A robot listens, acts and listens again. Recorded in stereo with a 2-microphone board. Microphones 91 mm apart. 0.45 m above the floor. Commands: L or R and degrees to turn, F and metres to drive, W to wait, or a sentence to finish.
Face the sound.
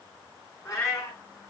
L30
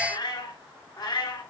L130
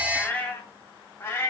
L30
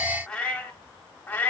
L20
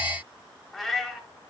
Facing the cat meowing.